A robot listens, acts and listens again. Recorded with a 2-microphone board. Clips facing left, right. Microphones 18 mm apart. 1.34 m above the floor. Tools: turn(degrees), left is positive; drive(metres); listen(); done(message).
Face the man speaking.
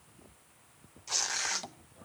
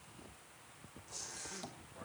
turn(degrees=-30)
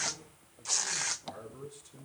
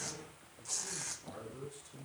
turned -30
turn(degrees=15)
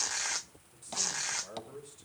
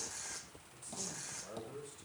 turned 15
turn(degrees=15)
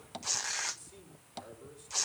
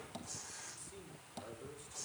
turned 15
done("Facing the man speaking, over 4 m away.")